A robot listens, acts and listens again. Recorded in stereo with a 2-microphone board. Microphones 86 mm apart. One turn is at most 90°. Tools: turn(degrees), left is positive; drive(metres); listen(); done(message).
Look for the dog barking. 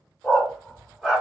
turn(degrees=-30)
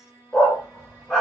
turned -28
turn(degrees=30)
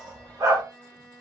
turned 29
turn(degrees=-40)
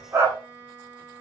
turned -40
turn(degrees=-30)
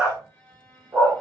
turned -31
turn(degrees=-20)
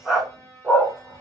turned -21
done("Found it: a dog barking, straight ahead.")